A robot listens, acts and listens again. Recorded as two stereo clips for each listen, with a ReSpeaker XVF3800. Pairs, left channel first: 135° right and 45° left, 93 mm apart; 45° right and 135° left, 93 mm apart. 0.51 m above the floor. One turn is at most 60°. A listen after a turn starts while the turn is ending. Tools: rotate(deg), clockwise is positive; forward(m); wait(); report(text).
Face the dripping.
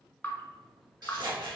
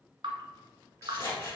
rotate(-60)
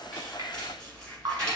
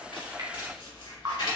rotate(-60)
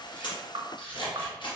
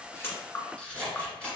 rotate(-20)
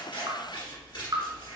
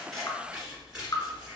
report("Found it: dripping, straight ahead, 1 to 2 m away.")